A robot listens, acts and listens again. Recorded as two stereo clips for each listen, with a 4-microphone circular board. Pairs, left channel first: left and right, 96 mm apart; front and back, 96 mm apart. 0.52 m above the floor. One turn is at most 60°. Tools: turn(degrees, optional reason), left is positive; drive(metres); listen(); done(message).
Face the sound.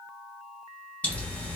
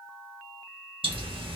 turn(degrees=60, reason="The pop: 165° left.")
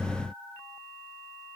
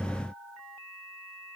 turn(degrees=60, reason="Nothing new. It was at 105° left.")
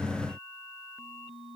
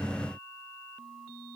turn(degrees=45, reason="Nothing new. It was at 45° left.")
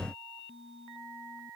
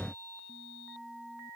done("Facing where the pop came from. I can't hear it now.")